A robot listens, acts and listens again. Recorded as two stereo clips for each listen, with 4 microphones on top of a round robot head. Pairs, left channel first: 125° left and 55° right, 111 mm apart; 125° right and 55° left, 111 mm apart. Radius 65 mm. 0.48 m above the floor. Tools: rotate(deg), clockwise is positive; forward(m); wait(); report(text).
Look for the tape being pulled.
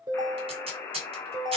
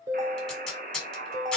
rotate(40)
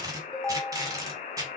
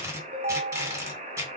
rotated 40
report("Found it: tape being pulled, straight ahead.")